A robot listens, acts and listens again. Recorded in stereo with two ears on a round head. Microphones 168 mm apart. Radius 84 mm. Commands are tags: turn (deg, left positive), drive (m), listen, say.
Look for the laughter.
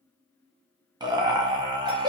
<turn deg="-20"/>
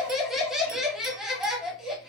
<say>Found it: laughter, straight ahead.</say>